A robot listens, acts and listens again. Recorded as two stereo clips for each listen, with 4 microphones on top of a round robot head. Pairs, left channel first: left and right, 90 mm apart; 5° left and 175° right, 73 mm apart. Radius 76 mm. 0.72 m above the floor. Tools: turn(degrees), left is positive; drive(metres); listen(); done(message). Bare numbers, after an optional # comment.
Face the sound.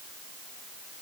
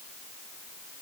listen()
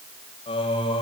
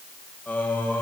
# The singing: 70° left.
turn(70)
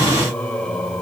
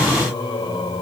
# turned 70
# The singing is now 10° left.
turn(10)
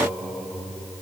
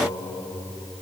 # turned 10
done("Found it: singing, straight ahead.")